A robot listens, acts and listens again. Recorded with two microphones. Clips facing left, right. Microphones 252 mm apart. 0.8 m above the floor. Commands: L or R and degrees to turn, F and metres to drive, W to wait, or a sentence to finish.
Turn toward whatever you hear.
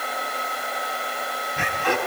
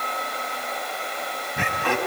R60
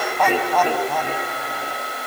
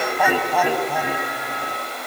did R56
R10
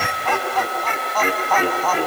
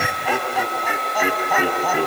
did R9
R15
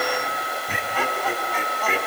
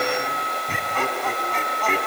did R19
Found it: laughter, straight ahead.